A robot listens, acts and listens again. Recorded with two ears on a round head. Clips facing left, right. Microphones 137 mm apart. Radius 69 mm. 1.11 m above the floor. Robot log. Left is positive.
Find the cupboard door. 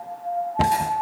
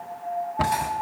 note: The cupboard door: about 30° left or 150° left.
cmd yaw +30
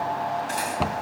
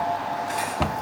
end: Facing the cupboard door.